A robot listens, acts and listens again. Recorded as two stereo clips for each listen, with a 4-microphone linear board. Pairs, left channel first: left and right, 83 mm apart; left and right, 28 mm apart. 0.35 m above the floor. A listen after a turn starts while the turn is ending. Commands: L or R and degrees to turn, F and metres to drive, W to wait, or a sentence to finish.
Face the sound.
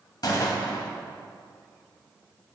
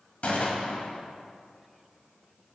L55
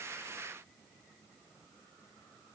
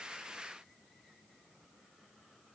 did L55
W
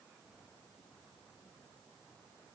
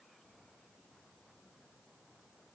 I heard a gunshot, but can't make it out now. It was about straight ahead or 70° left.